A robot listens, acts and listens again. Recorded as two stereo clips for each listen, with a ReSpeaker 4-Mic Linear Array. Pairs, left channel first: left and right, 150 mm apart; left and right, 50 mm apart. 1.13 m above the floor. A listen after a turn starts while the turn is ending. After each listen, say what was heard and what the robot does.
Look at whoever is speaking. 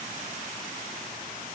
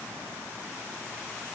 Keep listening.
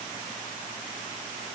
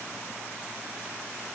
Keep listening.
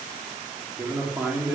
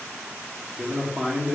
Turn 30° right.
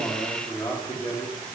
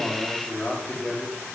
So it is at 15° left. Turn 15° left.
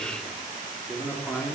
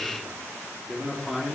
Found it: a man speaking, straight ahead.